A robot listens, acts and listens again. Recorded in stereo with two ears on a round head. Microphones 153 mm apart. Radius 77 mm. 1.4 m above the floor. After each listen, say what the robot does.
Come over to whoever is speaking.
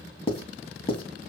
Keep listening.
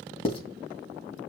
Keep listening.
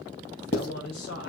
Turn 70° left.
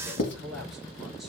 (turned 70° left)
Drive 1.0 m forward.
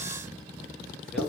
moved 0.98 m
Keep listening.
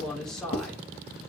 Drive 1.0 m forward.
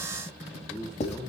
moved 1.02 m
Drive 1.0 m forward.
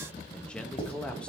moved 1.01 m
Drive 1.0 m forward.
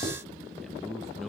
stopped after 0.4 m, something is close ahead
Arrived at the man speaking, straight ahead.